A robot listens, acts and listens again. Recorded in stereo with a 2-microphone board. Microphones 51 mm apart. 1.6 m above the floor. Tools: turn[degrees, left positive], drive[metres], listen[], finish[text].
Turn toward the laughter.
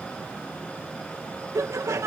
Action: turn[-90]
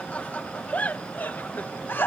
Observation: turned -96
Thought: So it is at 40° left.
Action: turn[40]
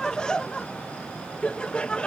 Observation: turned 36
Thought: The laughter is now 20° left.
Action: turn[20]
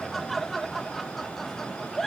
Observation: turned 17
Action: finish[Found it: laughter, straight ahead.]